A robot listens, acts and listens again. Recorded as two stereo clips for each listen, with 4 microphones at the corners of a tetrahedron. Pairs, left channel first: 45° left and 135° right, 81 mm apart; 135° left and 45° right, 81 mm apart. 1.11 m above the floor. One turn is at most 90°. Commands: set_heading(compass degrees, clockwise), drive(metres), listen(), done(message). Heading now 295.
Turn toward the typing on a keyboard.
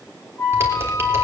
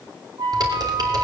set_heading(10)
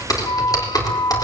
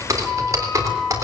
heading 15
done("Facing the typing on a keyboard.")